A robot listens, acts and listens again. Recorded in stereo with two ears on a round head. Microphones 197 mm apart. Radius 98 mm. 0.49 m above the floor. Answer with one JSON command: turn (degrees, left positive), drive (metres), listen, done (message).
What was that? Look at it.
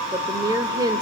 {"turn": -15}
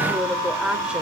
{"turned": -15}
{"done": "Facing the woman speaking."}